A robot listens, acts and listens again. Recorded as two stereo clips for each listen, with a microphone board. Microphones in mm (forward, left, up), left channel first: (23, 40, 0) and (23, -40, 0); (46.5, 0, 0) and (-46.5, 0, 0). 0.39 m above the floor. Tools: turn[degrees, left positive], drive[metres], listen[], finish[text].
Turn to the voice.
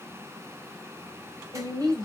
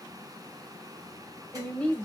Thought: The woman speaking: 75° right.
Action: turn[-75]
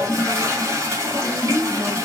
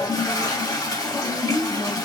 Thought: The woman speaking is now 20° left.
Action: turn[20]
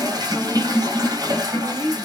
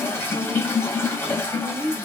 Action: finish[Found it: a woman speaking, straight ahead, 1 to 2 m away.]